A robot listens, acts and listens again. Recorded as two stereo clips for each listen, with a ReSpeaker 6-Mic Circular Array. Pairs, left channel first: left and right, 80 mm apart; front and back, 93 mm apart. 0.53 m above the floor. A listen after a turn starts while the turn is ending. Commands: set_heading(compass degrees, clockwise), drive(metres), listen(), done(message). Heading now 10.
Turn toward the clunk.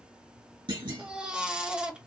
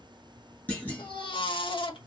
set_heading(85)
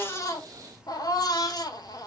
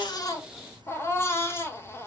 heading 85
done("I heard a clunk from this way, but can't make it out now.")